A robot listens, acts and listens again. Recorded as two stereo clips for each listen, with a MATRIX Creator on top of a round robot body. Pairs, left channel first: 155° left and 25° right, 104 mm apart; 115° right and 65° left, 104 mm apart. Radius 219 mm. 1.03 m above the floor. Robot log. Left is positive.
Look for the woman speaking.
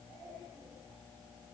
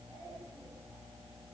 cmd idle
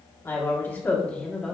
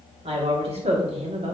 note: The woman speaking: 75° left.
cmd yaw +75
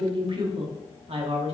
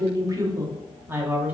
note: The woman speaking is now 10° right.
cmd yaw -10
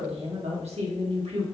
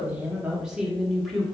note: The woman speaking is now 25° right.
cmd yaw -25
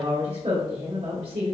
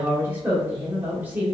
end: Facing the woman speaking.